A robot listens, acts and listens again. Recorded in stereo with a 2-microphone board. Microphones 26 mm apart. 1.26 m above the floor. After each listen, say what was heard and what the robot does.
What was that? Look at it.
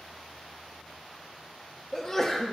The sneeze: about 20° left or 160° left. Turn 20° left.
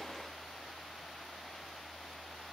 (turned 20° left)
Keep listening.
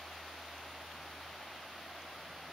I heard a sneeze, but can't make it out now. It was about straight ahead or 140° left.